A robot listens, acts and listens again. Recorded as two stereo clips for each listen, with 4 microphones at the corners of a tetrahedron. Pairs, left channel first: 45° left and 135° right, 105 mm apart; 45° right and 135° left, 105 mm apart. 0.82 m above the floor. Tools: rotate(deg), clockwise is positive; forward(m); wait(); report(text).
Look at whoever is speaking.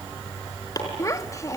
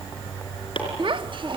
rotate(-105)
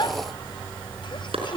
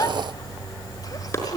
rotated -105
report("Found it: a child speaking, straight ahead, 1 to 2 m away.")